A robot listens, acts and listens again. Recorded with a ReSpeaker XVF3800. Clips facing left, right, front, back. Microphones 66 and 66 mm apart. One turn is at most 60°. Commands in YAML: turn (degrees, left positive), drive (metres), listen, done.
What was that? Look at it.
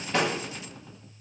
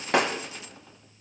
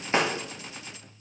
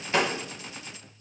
turn: -60
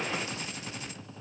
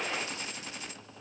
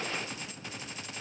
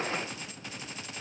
done: "I heard breaking glass from this way, but can't make it out now."